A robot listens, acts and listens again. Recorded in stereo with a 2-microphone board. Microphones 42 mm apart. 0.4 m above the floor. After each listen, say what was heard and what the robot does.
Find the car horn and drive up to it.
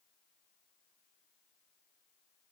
Keep listening.
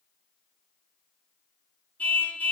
The car horn: about 40° left or 140° left. Turn 40° left.
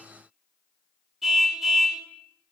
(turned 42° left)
Drive 1.0 m forward.
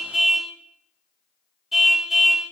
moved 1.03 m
Drive 1.0 m forward.
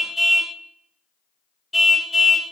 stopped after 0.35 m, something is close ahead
I am next to the car horn.